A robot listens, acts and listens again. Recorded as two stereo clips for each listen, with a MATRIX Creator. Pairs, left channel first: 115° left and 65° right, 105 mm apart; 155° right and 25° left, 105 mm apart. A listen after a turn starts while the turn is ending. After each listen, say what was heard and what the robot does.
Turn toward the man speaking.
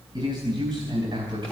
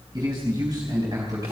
The man speaking: 30° right. Turn 30° right.
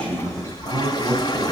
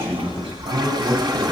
Found it: a man speaking, straight ahead.